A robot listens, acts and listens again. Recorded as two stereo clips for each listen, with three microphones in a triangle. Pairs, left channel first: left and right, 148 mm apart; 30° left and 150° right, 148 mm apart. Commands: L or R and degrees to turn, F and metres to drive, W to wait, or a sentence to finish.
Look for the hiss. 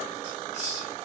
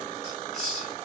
R55
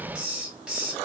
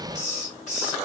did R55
Facing the hiss, 1 to 2 m away.